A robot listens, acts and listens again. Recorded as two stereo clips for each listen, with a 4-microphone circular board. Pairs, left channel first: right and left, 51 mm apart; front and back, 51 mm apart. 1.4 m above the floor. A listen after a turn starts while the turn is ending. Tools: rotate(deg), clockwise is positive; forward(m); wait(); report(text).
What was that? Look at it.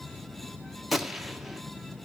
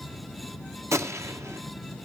rotate(-175)
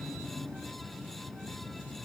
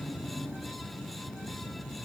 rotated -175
report("I heard a gunshot from this way, but can't make it out now.")